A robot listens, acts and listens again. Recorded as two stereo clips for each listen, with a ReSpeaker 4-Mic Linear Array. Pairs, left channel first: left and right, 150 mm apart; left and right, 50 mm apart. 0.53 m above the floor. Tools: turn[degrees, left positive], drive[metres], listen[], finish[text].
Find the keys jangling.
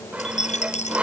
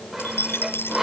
Thought: The keys jangling: about 45° left or 135° left.
Action: turn[45]
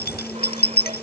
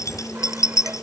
Thought: So it is at 85° left.
Action: turn[85]
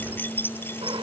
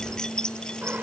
Thought: The keys jangling is now 15° left.
Action: turn[15]
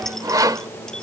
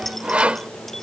Action: listen[]
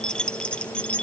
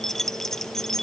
Thought: The keys jangling is now 10° left.
Action: turn[10]
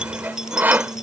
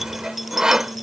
Action: listen[]
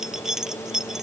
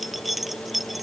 Action: finish[Facing the keys jangling.]